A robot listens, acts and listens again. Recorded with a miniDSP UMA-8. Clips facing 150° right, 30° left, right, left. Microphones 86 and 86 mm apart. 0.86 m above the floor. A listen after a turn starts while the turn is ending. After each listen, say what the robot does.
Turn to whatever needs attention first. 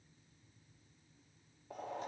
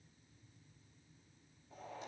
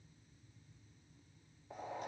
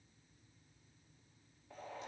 Keep listening.
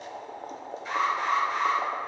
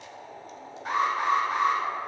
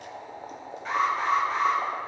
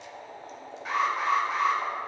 Facing the alarm.